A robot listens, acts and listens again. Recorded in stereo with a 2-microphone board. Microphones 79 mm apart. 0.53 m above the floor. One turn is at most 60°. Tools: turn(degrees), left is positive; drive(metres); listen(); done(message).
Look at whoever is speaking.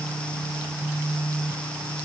listen()
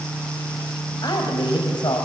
turn(degrees=60)
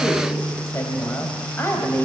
turn(degrees=35)
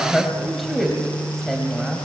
done("Facing the woman speaking, 2 to 4 m away.")